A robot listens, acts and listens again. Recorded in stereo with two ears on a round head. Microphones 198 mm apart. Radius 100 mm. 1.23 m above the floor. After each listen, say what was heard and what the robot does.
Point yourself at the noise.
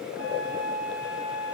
Turn 90° left.
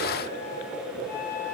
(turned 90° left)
So it is at 10° left. Turn 10° left.
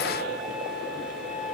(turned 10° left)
Found it: a flute, straight ahead, 2 to 4 m away.